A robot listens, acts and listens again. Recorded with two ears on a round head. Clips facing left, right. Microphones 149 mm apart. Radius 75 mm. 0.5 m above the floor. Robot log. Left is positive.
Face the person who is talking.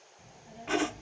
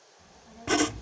note: The child speaking: about 30° left or 150° left.
cmd yaw +30
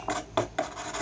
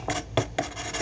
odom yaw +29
cmd idle
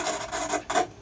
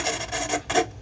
cmd idle
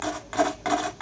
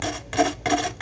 end: I heard a child speaking, but can't make it out now. It was about straight ahead or 120° left.